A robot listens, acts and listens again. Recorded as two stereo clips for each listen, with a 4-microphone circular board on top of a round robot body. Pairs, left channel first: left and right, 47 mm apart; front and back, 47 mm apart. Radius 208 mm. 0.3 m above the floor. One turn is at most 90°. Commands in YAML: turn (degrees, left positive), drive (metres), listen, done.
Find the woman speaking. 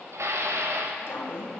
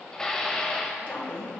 turn: 60
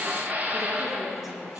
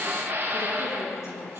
turn: -10
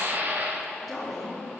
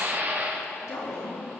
done: "Found it: a woman speaking, straight ahead, over 4 m away."